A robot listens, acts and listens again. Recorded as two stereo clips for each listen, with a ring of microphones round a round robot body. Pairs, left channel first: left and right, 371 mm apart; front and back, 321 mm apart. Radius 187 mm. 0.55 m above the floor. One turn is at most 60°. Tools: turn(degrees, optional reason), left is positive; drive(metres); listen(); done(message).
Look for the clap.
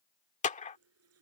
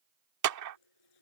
turn(degrees=60, reason="The clap: 160° left.")
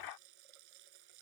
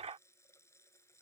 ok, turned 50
turn(degrees=60, reason="Nothing new. It was at 110° left.")
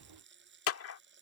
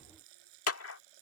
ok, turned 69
turn(degrees=40, reason="The clap is now 40° left.")
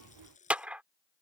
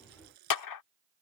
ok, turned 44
done("Facing the clap.")